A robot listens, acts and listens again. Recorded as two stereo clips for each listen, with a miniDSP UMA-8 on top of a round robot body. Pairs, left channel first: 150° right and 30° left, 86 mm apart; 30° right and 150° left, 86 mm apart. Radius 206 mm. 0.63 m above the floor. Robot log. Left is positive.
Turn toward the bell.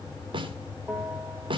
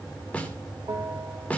note: The bell: 100° left.
cmd yaw +100
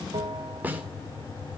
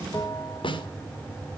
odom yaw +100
note: The bell is now 15° left.
cmd yaw +15
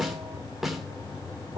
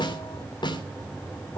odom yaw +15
cmd idle
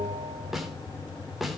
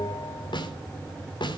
end: Found it: a bell, straight ahead, 2 to 4 m away.